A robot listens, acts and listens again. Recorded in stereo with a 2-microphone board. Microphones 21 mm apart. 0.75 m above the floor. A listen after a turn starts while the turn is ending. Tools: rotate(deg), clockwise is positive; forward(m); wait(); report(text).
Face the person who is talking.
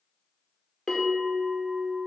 wait()
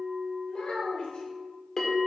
rotate(-55)
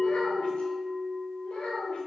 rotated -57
rotate(-70)
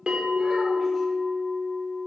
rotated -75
wait()
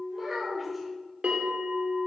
report("Facing the child speaking, 2 to 4 m away.")